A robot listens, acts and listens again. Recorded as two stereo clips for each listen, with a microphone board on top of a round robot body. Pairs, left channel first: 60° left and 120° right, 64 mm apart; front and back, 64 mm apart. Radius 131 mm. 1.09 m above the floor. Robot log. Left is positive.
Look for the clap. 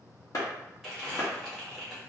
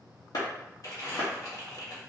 note: The clap: 20° left.
cmd yaw +20
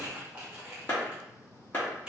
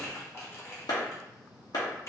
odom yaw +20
end: Found it: a clap, straight ahead.